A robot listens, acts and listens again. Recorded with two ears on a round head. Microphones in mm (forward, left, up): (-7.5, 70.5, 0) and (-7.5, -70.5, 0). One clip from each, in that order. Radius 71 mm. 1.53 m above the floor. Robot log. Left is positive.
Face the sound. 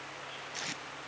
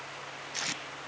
note: The tape being pulled: about 15° right or 165° right.
cmd yaw -15
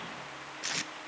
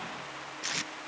end: Facing the tape being pulled.